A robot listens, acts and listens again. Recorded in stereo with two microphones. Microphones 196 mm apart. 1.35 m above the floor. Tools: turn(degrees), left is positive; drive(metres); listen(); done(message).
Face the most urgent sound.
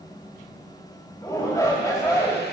turn(degrees=15)
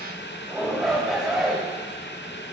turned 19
done("Facing the shout.")